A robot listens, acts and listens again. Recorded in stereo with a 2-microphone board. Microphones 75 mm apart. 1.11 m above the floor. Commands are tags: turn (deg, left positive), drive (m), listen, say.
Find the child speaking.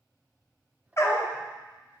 <listen/>
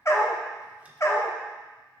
<listen/>
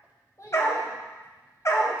<turn deg="45"/>
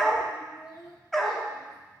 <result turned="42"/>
<turn deg="90"/>
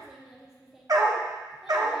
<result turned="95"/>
<say>Found it: a child speaking, straight ahead.</say>